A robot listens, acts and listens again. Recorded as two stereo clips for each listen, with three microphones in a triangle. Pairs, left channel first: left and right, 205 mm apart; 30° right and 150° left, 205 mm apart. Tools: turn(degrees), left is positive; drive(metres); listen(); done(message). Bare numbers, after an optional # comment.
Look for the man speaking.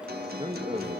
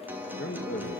# The man speaking: 25° right.
turn(-25)
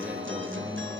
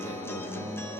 listen()
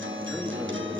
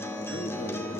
listen()
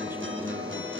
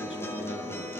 done("Facing where the man speaking came from. I can't hear it now.")